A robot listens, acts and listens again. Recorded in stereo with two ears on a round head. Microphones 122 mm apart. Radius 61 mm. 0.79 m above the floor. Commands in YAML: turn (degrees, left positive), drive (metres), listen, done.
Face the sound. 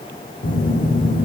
turn: 65
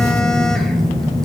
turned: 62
done: "Found it: a phone buzzing, straight ahead."